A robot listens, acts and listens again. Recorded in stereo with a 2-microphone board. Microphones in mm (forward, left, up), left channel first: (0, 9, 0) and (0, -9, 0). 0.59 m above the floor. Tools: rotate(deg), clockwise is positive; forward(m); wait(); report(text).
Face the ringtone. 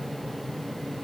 wait()
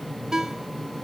rotate(30)
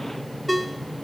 report("Found it: a ringtone, straight ahead.")